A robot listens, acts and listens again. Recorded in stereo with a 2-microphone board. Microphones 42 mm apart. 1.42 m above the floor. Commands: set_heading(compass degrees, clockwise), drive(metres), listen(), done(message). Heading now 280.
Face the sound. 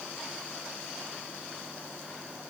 listen()
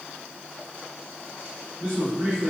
set_heading(10)
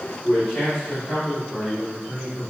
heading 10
set_heading(355)
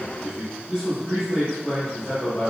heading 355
done("Found it: a man speaking, straight ahead.")